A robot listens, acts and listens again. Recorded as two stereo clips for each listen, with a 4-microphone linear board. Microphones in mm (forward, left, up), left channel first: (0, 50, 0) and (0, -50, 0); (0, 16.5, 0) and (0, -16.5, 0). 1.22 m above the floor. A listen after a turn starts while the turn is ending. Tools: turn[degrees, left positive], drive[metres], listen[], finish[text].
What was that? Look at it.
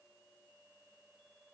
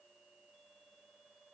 Action: listen[]
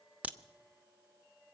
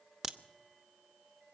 Action: turn[-30]
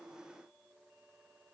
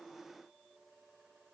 Action: listen[]
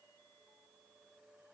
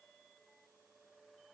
Action: finish[I heard a crack, but can't make it out now. It was about 15° left or 135° right.]